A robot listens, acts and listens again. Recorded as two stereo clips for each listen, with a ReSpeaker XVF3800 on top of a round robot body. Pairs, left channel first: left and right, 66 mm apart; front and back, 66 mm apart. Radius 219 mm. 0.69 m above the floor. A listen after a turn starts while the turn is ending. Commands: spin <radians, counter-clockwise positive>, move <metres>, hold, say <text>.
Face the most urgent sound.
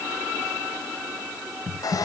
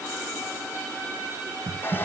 hold
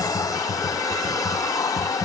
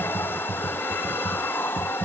hold
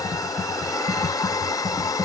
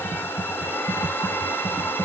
say I can't make out anything urgent, only typing on a keyboard and a hair dryer.